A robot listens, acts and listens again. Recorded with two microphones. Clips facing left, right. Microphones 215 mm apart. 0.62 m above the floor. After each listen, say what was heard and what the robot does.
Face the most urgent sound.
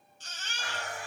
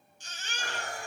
Turn 30° right.
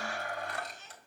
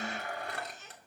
So it is at 135° right. Turn 135° right.
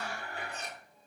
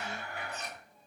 Keep listening.
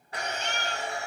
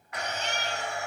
Facing the baby crying.